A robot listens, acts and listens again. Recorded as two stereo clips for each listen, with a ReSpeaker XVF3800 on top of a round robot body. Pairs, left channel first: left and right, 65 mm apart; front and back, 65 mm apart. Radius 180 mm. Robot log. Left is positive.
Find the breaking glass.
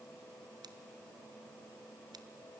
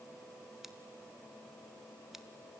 cmd idle
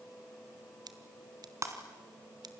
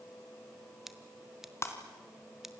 note: The breaking glass: 50° right.
cmd yaw -50
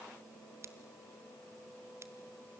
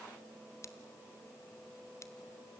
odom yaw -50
end: I heard breaking glass from this way, but can't make it out now.